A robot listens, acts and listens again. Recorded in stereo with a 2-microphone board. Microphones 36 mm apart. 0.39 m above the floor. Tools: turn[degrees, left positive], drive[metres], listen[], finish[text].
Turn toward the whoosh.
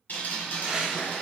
Thought: The whoosh: about 20° right or 160° right.
Action: turn[-20]
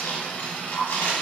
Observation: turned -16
Action: listen[]
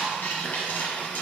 Action: listen[]
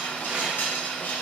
Action: finish[I heard a whoosh, but can't make it out now. It was about 5° right or 140° right.]